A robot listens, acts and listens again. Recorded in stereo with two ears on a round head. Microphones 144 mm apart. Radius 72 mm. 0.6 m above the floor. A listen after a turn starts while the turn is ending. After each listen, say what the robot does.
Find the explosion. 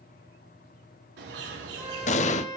Turn 45° left.
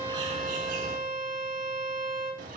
Keep listening.
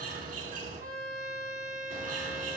I heard an explosion, but can't make it out now. It was about straight ahead or 90° left.